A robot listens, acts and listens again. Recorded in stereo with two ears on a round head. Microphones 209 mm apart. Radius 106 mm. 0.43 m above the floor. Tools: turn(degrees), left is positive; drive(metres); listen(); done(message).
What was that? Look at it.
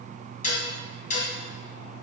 turn(degrees=35)
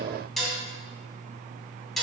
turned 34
done("Facing the dishes clattering.")